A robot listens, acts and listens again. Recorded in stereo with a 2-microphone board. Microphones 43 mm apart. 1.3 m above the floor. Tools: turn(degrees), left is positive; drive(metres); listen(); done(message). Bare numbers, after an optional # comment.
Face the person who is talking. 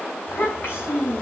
# The child speaking: about 55° left or 125° left.
turn(55)
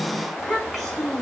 done("Facing the child speaking.")